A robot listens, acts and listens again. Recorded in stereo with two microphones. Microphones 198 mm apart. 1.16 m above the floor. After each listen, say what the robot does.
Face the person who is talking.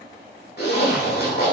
Keep listening.
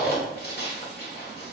Keep listening.
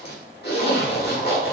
I can't make out anyone speaking to turn to.